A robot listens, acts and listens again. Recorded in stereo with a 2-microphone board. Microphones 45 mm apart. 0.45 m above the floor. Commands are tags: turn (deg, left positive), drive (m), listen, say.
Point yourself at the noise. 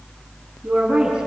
<turn deg="-20"/>
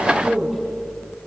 <say>Found it: a woman speaking, straight ahead, over 4 m away.</say>